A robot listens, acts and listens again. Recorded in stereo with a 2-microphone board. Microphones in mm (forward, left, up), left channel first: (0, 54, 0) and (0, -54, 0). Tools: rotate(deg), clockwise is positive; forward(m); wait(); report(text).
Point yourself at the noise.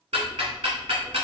rotate(90)
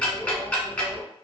rotate(-10)
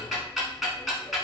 report("Found it: ticking, straight ahead, 1 to 2 m away.")